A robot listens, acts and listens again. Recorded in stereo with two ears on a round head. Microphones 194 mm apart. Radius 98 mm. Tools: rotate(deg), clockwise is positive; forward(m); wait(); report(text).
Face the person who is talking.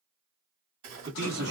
rotate(50)
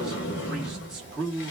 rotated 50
report("Facing the man speaking.")